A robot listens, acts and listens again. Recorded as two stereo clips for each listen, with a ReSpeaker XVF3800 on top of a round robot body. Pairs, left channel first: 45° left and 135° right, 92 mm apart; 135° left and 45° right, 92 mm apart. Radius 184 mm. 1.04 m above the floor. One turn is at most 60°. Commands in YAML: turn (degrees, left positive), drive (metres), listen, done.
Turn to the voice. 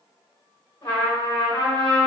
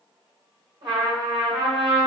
listen: true
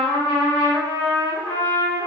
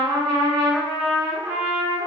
listen: true
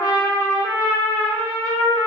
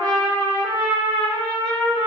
done: "I can't make out anyone speaking to turn to."